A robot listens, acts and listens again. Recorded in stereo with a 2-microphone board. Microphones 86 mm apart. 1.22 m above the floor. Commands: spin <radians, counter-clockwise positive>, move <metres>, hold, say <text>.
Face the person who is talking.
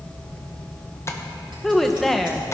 spin 0.52
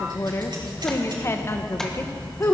spin 2.53
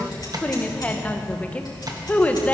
spin 0.35
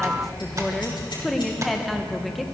say Found it: a woman speaking, straight ahead.